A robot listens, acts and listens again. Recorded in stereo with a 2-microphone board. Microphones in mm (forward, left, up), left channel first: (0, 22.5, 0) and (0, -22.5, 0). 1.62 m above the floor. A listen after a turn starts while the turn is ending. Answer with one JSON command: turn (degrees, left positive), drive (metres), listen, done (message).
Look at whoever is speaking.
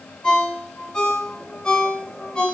{"listen": true}
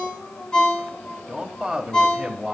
{"turn": -30}
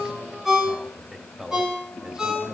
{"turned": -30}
{"turn": -20}
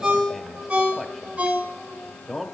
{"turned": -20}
{"turn": 30}
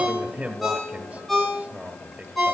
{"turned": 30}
{"turn": -30}
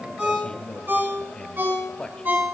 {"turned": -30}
{"turn": 25}
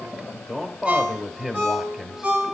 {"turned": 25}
{"done": "Facing the man speaking, 1 to 2 m away."}